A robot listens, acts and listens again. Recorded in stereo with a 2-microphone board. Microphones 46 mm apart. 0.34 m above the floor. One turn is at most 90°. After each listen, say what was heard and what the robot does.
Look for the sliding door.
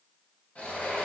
The sliding door: about 40° left or 140° left. Turn 40° left.
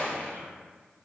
So it is at 95° left. Turn 90° left.
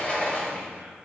The sliding door is now 35° left. Turn 35° left.
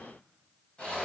The sliding door is now 30° left. Turn 30° left.
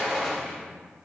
Facing the sliding door, under 1 m away.